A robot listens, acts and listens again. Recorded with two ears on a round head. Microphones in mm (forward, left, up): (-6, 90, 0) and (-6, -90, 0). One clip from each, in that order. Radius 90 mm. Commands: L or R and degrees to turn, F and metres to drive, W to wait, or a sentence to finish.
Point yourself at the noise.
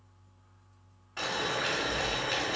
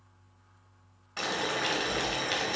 R20
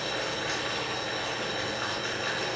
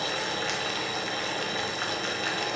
R140
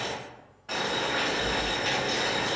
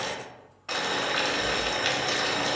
R30
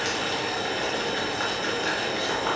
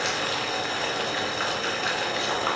R10
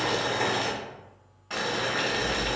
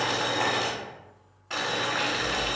Facing the boiling, under 1 m away.